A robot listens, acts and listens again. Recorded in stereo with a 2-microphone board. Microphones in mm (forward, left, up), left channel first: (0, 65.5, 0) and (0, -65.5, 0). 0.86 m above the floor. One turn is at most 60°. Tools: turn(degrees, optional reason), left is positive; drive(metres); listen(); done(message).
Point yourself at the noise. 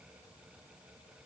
listen()
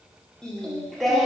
turn(degrees=30)
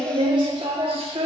turn(degrees=-50, reason="So it is at 50° right.")
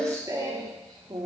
turn(degrees=-35, reason="The singing is now 35° right.")
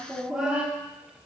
turn(degrees=-10, reason="The singing is now 10° right.")
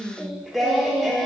done("Found it: singing, straight ahead, 1 to 2 m away.")